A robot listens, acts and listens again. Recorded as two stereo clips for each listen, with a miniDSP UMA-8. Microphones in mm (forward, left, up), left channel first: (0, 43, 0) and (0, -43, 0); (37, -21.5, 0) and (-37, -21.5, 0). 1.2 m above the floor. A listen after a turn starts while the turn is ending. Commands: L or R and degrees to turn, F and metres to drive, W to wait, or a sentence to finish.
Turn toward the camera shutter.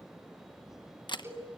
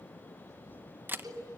L120
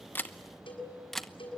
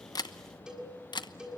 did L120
Found it: a camera shutter, straight ahead, under 1 m away.